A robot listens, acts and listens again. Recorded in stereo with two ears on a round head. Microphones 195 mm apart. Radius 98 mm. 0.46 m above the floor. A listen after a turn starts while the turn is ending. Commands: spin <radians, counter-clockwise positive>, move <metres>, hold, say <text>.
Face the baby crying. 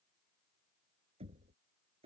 hold
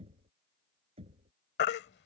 spin 0.87
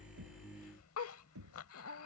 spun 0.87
hold
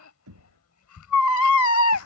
spin 1.31
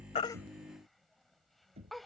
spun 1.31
hold
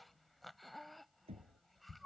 hold
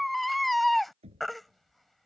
say Found it: a baby crying, straight ahead.